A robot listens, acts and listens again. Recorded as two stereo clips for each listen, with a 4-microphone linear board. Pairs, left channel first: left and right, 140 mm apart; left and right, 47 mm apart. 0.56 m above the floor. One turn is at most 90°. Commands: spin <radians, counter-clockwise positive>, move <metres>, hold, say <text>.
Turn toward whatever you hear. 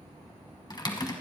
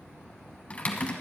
spin 0.52
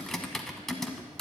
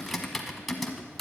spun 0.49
say Found it: typing on a keyboard, straight ahead, 1 to 2 m away.